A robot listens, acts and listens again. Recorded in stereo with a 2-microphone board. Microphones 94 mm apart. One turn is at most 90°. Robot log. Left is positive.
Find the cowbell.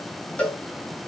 cmd yaw +30
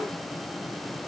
cmd idle
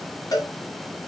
note: So it is at 135° left.
cmd yaw +90
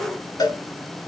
note: The cowbell is now 45° left.
cmd yaw +45
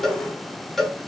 end: Found it: a cowbell, straight ahead.